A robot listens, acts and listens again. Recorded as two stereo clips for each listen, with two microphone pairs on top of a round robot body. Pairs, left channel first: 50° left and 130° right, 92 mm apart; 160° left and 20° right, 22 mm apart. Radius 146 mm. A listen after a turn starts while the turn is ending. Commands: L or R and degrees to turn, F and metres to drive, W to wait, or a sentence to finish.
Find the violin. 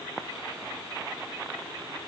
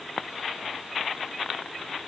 W
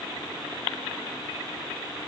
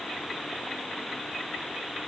W
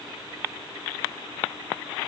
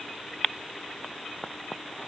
I can't make out a violin to turn to.